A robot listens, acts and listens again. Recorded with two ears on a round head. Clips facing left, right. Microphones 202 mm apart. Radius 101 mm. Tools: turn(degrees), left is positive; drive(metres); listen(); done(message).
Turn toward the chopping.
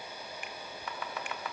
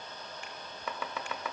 turn(degrees=-75)
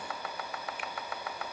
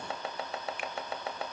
turn(degrees=-25)
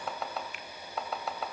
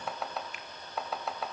done("Found it: chopping, straight ahead, 2 to 4 m away.")